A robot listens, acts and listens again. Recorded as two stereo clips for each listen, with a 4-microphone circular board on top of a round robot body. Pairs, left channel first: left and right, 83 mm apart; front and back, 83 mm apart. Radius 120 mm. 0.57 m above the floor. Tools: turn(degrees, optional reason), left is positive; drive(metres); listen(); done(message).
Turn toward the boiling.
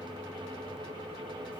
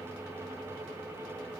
listen()
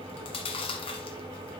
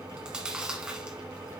listen()
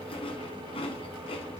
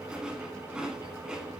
done("I can't make out boiling, only chewing.")